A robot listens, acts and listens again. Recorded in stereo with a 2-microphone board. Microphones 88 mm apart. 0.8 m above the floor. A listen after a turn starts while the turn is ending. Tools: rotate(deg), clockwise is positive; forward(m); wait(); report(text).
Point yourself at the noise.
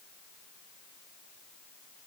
wait()
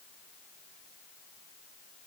wait()
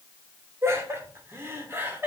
rotate(25)
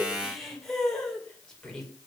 report("Facing the laughter.")